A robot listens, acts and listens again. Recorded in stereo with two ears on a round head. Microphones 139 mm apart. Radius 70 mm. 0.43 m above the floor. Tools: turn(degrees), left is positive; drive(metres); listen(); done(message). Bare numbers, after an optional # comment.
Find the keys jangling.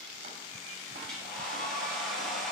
listen()
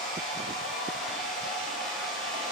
listen()
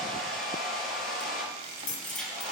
# The keys jangling: about 30° left or 150° left.
turn(30)
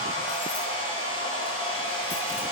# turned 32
listen()
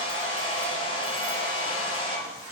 listen()
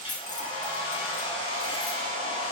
# So it is at 125° left.
turn(125)
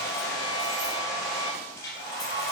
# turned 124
listen()
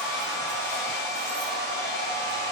listen()
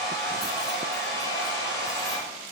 done("I heard keys jangling from this way, but can't make it out now.")